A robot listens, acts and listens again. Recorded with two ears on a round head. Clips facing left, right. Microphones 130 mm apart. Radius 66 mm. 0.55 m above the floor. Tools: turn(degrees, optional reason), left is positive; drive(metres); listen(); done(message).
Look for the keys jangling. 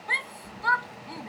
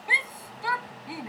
turn(degrees=65, reason="The keys jangling: about 65° left or 115° left.")
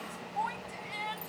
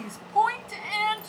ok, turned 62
listen()
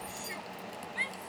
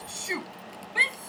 done("Found it: keys jangling, straight ahead.")